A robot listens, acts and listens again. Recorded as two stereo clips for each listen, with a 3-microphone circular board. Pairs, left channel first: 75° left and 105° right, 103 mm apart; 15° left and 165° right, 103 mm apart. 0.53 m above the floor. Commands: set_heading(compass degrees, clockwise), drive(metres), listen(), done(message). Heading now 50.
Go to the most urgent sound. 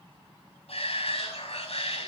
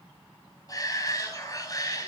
set_heading(340)
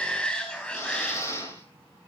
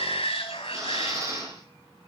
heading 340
drive(1.0)
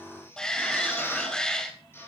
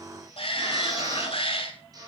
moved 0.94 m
set_heading(350)
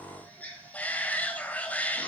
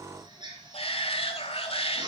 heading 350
drive(1.0)
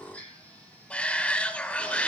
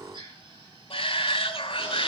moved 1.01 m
drive(1.0)
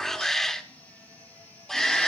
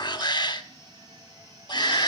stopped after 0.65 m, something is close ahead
set_heading(0)
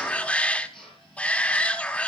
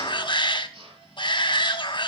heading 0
done("I am next to the shout.")